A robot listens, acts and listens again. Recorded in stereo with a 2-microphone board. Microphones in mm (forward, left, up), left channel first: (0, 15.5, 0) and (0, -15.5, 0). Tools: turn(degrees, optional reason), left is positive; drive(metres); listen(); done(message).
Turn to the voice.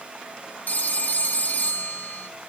listen()
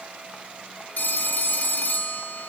listen()
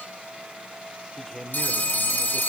turn(degrees=15, reason="The man speaking: about 15° left or 165° left.")
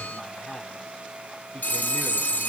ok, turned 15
turn(degrees=150, reason="So it is at 150° left.")
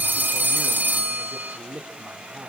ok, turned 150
turn(degrees=-45, reason="The man speaking is now 45° right.")
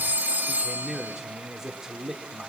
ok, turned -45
turn(degrees=-15, reason="The man speaking is now 15° right.")
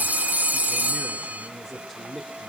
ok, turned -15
done("Facing the man speaking, 2 to 4 m away.")